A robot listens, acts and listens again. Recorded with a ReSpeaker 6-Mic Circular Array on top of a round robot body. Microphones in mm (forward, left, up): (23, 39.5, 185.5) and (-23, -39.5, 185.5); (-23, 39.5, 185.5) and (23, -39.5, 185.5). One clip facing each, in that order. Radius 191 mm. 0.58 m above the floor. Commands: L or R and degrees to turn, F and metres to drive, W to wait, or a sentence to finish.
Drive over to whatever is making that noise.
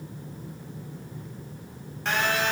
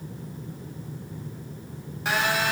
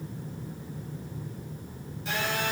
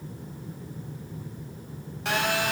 R40
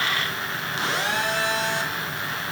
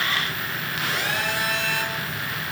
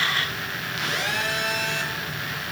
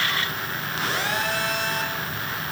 F1.0
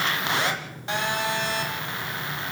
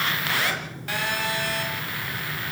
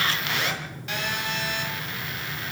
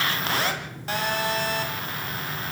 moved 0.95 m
F1.0
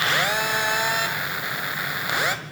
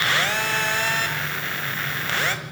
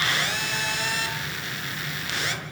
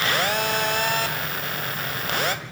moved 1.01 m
R15
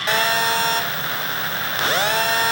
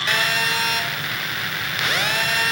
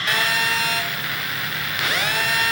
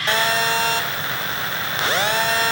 F1.0
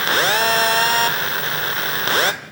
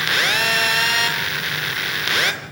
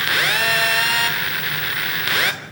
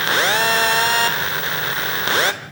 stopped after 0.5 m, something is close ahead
I am next to the phone buzzing.